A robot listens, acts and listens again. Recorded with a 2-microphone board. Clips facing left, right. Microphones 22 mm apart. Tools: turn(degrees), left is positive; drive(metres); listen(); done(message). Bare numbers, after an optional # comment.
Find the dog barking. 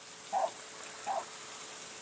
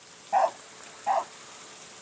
# The dog barking: about 65° right or 115° right.
turn(-65)
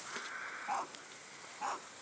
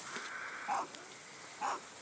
# So it is at 10° right.
turn(-10)
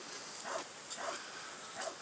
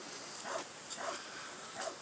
done("Found it: a dog barking, straight ahead.")